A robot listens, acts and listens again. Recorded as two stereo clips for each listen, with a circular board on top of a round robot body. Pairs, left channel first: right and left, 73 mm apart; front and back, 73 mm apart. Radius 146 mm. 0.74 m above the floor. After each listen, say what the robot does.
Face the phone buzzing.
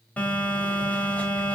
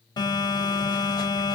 Turn 20° right.
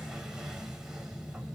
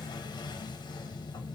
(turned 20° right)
Turn 10° left.
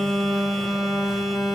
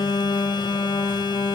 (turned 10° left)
Found it: a phone buzzing, straight ahead, 1 to 2 m away.